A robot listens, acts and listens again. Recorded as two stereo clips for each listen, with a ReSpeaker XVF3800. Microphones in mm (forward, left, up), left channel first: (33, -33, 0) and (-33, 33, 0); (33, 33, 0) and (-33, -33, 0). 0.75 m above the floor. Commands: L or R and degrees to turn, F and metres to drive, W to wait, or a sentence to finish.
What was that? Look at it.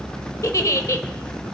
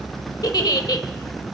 Facing the giggle.